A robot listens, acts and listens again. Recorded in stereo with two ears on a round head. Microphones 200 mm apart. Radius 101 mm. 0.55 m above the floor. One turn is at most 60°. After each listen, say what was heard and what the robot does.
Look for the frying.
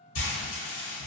The frying: about 55° left or 125° left. Turn 55° left.
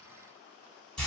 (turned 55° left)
Found it: frying, straight ahead, under 1 m away.